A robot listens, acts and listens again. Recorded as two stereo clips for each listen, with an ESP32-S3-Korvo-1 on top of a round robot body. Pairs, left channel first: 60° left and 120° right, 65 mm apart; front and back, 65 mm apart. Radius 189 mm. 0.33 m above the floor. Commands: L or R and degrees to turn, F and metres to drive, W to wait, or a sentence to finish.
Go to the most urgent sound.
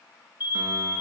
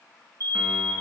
R175
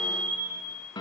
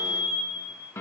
R10
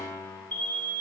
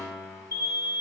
F1.0
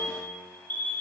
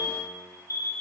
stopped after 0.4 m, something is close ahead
Blocked. The alarm is further on, straight ahead.